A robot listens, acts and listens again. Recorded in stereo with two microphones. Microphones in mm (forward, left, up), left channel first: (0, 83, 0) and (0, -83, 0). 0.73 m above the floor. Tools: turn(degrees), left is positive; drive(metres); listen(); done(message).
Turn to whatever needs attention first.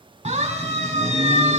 turn(degrees=-45)
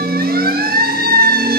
turn(degrees=-90)
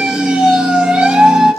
done("Found it: a siren, straight ahead.")